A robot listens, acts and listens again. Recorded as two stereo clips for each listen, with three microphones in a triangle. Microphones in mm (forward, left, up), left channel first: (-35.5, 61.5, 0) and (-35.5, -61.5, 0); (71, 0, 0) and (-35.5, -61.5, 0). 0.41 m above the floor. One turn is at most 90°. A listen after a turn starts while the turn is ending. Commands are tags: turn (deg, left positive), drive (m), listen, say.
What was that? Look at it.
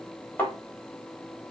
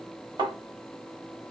<turn deg="90"/>
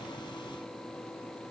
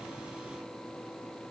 <turn deg="75"/>
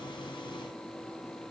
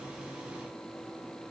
<say>I heard a thud from this way, but can't make it out now.</say>